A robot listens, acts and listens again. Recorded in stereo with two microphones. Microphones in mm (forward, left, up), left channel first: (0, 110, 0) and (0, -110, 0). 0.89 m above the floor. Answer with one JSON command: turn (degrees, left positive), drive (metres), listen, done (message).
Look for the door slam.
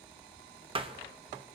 {"turn": -25}
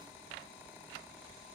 {"listen": true}
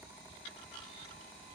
{"done": "I heard a door slam, but can't make it out now. It was about straight ahead or 130° right."}